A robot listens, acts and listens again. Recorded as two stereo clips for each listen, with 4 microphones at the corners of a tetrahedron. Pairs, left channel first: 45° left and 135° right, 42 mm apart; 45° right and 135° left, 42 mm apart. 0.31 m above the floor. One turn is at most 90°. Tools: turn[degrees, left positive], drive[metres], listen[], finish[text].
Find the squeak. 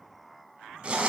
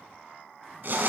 Action: listen[]
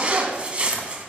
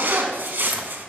Action: listen[]
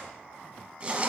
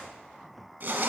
Action: finish[I can't make out a squeak, only a zipper.]